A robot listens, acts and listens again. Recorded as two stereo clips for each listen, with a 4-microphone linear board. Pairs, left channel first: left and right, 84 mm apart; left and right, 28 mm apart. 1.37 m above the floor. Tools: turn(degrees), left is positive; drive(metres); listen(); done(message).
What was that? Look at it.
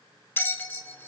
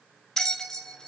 turn(degrees=25)
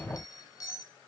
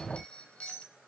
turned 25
turn(degrees=130)
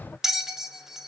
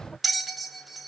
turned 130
done("Found it: a bell, straight ahead.")